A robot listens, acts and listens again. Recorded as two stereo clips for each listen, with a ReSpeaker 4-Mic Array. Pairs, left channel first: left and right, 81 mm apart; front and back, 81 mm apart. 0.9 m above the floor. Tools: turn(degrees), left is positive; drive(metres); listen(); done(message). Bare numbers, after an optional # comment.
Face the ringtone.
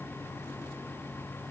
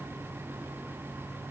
listen()
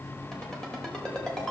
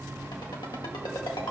# The ringtone: 10° left.
turn(10)
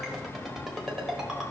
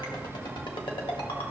done("Facing the ringtone, 1 to 2 m away.")